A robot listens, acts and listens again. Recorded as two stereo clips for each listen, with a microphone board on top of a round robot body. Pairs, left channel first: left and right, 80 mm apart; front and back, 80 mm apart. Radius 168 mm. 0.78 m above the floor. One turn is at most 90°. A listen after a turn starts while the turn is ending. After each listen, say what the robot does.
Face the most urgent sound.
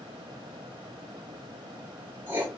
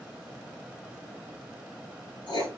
Keep listening.
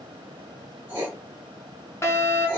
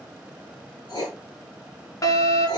Turn 35° left.
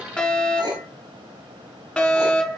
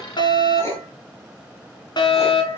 Turn 10° left.
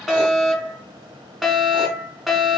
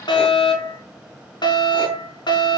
Found it: a fire alarm, straight ahead, 2 to 4 m away.